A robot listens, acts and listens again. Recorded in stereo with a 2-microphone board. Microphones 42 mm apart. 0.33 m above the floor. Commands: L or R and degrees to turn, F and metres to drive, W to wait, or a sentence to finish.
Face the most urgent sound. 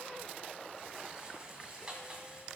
W
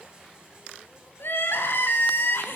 L65
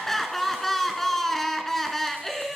Facing the crying.